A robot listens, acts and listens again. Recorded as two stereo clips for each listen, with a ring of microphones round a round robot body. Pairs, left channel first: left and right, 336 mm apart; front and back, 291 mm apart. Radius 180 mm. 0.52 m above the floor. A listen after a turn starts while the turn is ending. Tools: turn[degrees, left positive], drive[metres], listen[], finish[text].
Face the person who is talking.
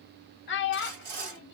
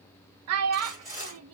Thought: The child speaking: 145° left.
Action: turn[145]
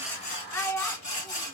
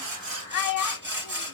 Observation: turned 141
Action: finish[Found it: a child speaking, straight ahead, under 1 m away.]